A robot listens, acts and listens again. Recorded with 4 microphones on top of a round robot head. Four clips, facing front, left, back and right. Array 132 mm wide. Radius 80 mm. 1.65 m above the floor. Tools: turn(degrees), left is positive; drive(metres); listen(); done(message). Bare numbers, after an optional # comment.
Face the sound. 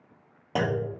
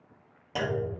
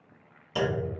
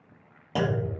# The clunk: 20° right.
turn(-20)
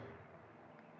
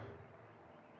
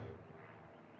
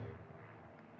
done("I heard a clunk from this way, but can't make it out now.")